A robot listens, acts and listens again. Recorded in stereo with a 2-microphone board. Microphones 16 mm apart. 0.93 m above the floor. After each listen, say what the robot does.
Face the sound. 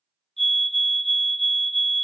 Turn 30° left.
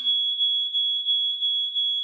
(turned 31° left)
Found it: a fire alarm, straight ahead.